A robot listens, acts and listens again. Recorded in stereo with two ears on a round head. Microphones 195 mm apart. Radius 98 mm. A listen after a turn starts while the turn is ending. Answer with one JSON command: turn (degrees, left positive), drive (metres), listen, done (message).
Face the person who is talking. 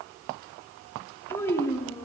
{"turn": 30}
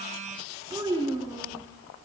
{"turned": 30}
{"turn": -20}
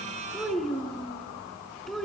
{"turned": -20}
{"done": "Found it: a child speaking, straight ahead, 2 to 4 m away."}